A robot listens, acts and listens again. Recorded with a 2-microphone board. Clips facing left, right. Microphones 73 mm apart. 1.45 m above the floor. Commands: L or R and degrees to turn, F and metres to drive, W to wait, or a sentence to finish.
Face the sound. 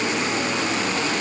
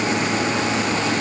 W
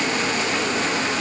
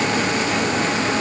W
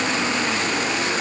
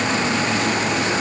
I can't make out anything.